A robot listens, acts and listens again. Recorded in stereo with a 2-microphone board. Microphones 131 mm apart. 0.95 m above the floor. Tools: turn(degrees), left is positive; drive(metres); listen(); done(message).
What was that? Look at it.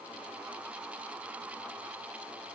listen()
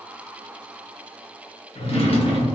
turn(degrees=45)
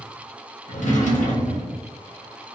turn(degrees=85)
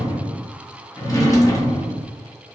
turn(degrees=30)
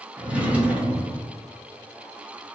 turn(degrees=-10)
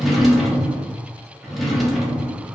done("Found it: a drawer, straight ahead.")